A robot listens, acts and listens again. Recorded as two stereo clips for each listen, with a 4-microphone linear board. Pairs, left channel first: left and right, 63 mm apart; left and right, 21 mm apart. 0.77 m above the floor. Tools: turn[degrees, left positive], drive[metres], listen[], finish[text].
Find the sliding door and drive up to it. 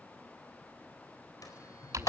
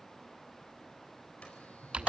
Thought: The sliding door: about 75° left or 105° left.
Action: turn[75]
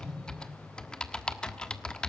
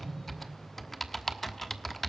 Action: drive[1.0]
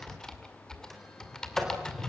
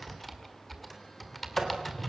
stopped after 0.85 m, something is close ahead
Action: finish[Blocked. The sliding door is further on, straight ahead.]